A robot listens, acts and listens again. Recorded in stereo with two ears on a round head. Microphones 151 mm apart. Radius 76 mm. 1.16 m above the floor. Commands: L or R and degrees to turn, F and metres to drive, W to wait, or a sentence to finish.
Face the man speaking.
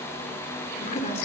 L45
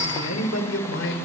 L100
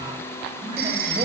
W
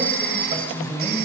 R35
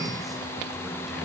W
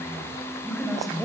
Facing the man speaking, over 4 m away.